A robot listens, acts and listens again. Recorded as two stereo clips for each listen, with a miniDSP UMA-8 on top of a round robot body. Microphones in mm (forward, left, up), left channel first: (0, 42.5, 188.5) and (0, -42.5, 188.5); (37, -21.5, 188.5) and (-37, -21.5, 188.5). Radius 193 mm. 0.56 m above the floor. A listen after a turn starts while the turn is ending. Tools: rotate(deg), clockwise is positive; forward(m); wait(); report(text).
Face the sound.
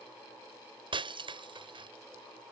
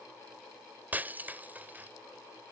rotate(115)
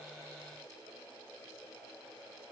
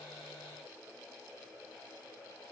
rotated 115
report("I heard breaking glass from this way, but can't make it out now.")